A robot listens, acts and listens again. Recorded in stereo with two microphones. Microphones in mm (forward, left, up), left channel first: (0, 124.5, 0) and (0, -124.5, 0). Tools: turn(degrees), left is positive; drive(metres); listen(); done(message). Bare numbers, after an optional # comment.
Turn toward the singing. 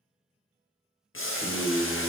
turn(30)
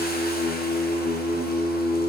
turn(-30)
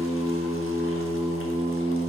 # So it is at 30° left.
turn(30)
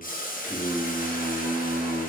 done("Facing the singing.")